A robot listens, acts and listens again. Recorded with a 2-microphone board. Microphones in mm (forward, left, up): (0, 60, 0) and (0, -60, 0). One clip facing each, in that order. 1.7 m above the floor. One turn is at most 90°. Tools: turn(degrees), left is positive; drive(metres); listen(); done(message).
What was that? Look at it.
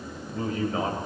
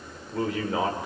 turn(degrees=-90)
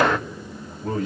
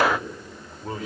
done("Facing the man speaking, over 4 m away.")